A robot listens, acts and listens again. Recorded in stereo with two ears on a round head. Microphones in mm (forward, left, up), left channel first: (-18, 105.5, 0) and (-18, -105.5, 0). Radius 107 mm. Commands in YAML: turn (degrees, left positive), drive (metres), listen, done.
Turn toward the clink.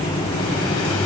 listen: true
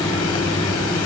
listen: true
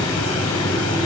done: "I can't make out a clink."